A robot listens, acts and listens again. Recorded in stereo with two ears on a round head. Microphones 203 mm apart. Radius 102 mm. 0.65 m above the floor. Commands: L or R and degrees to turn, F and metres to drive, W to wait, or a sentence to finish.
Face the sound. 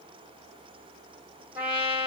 R30
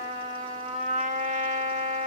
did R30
R140
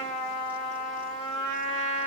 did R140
Facing the trumpet, 1 to 2 m away.